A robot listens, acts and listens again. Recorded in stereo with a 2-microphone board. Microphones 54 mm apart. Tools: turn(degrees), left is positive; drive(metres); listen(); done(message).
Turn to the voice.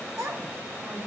turn(degrees=-65)
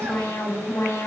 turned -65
listen()
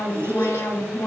listen()
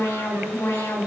done("I heard a child speaking, but can't make it out now. It was about straight ahead or 50° right.")